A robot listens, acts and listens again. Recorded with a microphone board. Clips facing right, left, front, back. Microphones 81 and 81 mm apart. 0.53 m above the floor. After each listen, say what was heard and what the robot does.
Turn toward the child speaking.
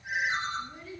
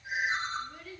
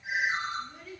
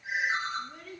The child speaking: 145° right. Turn 145° right.
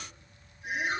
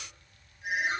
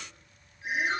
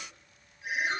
Keep listening.
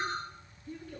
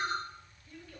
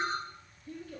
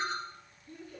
Facing the child speaking.